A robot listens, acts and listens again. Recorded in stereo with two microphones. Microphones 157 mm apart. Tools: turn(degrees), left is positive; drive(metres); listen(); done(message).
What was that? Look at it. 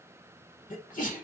turn(degrees=55)
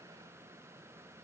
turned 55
listen()
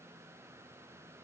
done("I heard a sneeze, but can't make it out now. It was about straight ahead or 70° left.")